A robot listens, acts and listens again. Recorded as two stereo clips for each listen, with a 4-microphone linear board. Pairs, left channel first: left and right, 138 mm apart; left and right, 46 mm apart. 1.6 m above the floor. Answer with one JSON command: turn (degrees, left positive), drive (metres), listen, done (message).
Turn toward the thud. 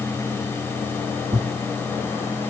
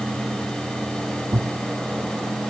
{"turn": -45}
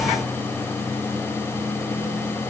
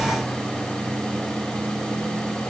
{"listen": true}
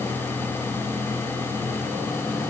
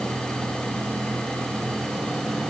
{"done": "I heard a thud, but can't make it out now. It was about straight ahead or 90° right."}